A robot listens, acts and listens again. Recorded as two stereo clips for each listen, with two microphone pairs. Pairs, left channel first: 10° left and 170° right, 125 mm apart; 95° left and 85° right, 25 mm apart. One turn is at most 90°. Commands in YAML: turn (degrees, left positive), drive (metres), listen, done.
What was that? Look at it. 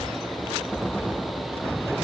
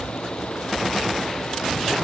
listen: true
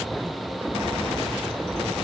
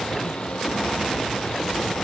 listen: true
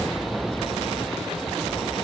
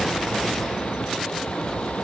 done: "I can't make out anything."